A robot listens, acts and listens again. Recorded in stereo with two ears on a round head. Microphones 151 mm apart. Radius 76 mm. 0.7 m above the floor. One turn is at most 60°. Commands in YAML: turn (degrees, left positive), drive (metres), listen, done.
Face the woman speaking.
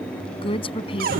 turn: 35
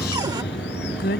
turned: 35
turn: 60
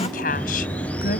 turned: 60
turn: 55
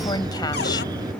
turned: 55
listen: true
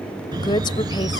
turn: 30
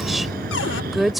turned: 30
done: "Facing the woman speaking."